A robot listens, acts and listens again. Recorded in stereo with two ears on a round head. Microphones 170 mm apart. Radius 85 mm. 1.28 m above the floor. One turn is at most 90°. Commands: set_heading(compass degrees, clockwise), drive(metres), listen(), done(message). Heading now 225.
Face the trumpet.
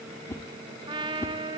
set_heading(250)
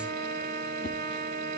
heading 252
set_heading(342)
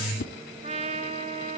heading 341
set_heading(21)
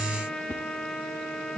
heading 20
done("Facing the trumpet.")